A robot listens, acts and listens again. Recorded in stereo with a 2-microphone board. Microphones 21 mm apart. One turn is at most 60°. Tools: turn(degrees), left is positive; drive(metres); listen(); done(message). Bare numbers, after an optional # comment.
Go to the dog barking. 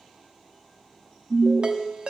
listen()
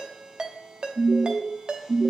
listen()
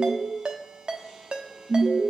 done("I can't make out a dog barking, only a ringtone and an alarm.")